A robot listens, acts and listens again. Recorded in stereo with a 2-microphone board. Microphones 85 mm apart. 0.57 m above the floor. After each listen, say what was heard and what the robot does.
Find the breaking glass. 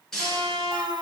Turn 30° left.
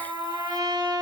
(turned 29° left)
Keep listening.
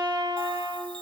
I heard breaking glass, but can't make it out now. It was about 25° right or 145° left.